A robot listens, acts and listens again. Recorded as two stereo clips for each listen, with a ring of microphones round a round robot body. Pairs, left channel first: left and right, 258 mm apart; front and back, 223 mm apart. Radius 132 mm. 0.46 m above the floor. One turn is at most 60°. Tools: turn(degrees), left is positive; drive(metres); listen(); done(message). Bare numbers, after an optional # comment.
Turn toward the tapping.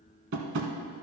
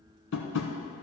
# The tapping: 45° right.
turn(-45)
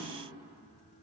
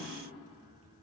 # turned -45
listen()
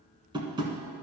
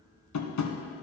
# The tapping is now 15° right.
turn(-15)
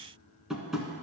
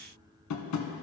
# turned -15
done("Found it: tapping, straight ahead, 1 to 2 m away.")